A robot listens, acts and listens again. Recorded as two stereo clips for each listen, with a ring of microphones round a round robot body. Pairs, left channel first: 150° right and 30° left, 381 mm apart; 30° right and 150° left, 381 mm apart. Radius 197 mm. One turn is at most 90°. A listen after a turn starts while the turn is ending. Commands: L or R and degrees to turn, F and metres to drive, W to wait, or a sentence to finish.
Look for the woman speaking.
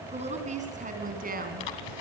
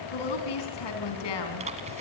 R35
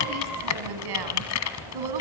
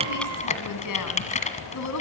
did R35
L15
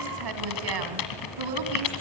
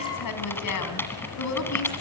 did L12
L15
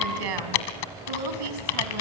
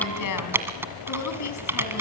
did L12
L15
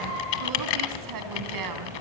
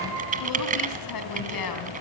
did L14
Found it: a woman speaking, straight ahead, 2 to 4 m away.